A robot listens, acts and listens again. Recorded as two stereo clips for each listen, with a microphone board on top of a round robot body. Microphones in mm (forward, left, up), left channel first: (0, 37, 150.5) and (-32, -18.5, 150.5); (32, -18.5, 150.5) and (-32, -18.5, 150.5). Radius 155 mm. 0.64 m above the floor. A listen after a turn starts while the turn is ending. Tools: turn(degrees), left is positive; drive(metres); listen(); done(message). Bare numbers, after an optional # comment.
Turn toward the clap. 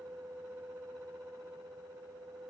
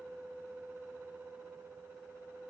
listen()
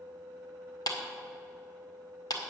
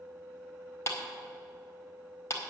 # The clap: 50° left.
turn(50)
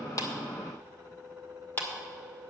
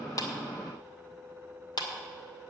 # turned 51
done("Facing the clap.")